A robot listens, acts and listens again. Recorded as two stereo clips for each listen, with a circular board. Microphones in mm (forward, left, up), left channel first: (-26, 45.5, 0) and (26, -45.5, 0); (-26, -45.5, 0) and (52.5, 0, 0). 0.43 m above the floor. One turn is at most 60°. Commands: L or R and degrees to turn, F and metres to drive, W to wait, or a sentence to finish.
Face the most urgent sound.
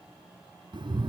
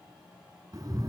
W
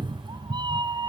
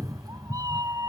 W
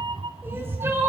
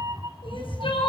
R60
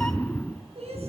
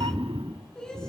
R60
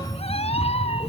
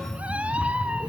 R10
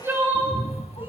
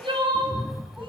Found it: crying, straight ahead, over 4 m away.